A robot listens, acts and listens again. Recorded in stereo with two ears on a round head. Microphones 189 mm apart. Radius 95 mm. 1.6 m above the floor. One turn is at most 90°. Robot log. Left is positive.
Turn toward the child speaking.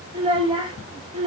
note: The child speaking: about 25° right or 155° right.
cmd yaw -25
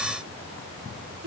note: So it is at 130° right.
cmd yaw -90
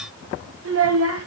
note: The child speaking is now 70° right.
cmd yaw -70
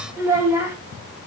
note: The child speaking is now 10° right.
cmd yaw -10
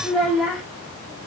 end: Facing the child speaking.